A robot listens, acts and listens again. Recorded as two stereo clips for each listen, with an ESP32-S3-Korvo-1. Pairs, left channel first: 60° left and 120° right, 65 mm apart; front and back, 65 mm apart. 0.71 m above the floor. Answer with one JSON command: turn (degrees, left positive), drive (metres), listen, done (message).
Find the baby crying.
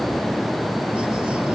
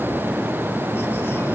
{"listen": true}
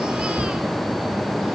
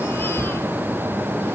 {"listen": true}
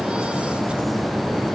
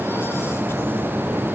{"done": "I can't make out a baby crying to turn to."}